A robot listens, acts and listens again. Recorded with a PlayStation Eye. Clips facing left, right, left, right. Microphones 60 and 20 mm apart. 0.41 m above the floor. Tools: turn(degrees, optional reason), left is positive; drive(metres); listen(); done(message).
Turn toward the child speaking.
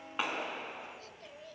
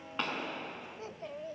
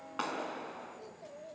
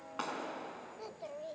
turn(degrees=-30, reason="The child speaking: about 30° right or 150° right.")
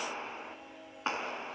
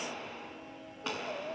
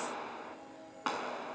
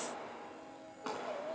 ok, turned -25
listen()
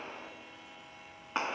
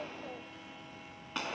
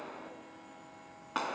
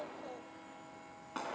listen()
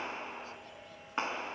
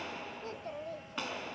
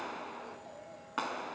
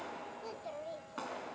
turn(degrees=-115, reason="So it is at 115° right.")
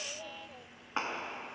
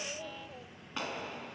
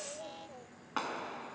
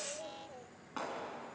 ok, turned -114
done("Found it: a child speaking, straight ahead.")